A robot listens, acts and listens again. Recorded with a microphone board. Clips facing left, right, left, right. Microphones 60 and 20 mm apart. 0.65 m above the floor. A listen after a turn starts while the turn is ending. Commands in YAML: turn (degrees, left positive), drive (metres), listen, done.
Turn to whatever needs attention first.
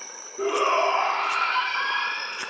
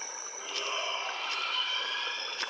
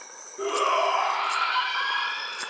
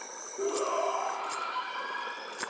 turn: 50
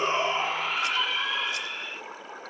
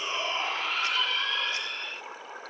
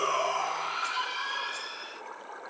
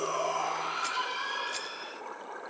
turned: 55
turn: 10
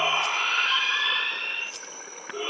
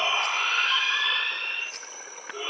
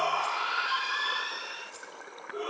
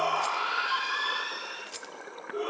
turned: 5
done: "Found it: a shout, straight ahead, 1 to 2 m away."